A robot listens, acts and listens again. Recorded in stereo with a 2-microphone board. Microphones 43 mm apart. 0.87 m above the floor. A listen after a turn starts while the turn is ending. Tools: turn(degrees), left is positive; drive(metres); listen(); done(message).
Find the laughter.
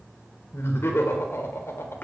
turn(degrees=75)
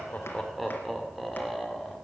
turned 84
done("Found it: laughter, straight ahead, 2 to 4 m away.")